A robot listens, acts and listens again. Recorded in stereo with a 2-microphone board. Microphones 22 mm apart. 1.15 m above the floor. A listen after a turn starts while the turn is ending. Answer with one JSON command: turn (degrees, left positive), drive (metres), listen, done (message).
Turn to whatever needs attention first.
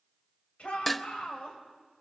{"turn": 70}
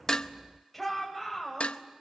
{"done": "Facing the shout, over 4 m away."}